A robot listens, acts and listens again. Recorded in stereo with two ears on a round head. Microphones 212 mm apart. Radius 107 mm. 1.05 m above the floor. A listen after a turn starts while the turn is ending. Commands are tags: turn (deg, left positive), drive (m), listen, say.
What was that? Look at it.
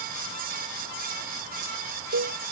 <turn deg="-55"/>
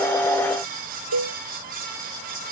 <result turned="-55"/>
<turn deg="-70"/>
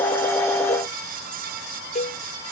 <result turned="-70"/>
<turn deg="30"/>
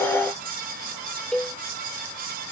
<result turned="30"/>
<say>Facing the cowbell.</say>